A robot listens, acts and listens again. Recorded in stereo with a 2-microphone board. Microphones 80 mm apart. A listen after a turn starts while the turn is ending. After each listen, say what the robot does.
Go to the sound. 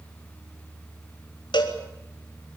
Turn 70° left.
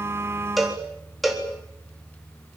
Drive 1.0 m forward.
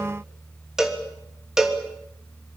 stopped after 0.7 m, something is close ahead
Something is in my way. I am facing the cowbell but have not reached it.